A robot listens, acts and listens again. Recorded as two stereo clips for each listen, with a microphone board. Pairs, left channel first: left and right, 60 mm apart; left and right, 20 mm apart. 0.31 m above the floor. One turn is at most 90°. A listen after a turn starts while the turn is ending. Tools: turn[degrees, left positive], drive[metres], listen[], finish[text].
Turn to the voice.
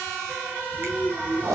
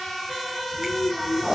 Thought: The child speaking: about 20° right or 160° right.
Action: turn[-20]
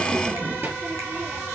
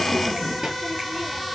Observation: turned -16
Thought: So it is at 145° right.
Action: turn[-90]
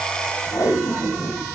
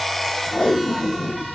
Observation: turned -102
Thought: Nothing new. It was at 40° right.
Action: turn[-40]
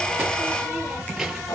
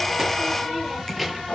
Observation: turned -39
Action: finish[Found it: a child speaking, straight ahead, 2 to 4 m away.]